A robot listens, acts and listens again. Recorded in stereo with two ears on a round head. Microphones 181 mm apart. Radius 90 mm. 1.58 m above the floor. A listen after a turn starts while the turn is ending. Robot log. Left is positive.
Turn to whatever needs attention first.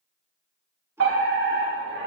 note: The fire alarm: about 70° right or 110° right.
cmd yaw -70
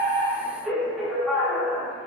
end: Facing the fire alarm, over 4 m away.